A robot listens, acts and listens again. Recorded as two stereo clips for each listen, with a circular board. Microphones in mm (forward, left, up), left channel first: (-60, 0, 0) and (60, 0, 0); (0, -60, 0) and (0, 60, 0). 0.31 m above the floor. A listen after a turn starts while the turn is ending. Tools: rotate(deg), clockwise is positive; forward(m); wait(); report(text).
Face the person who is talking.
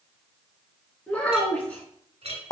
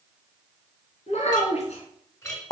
rotate(100)
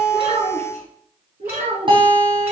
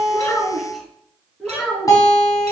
report("Found it: a child speaking, straight ahead, 2 to 4 m away.")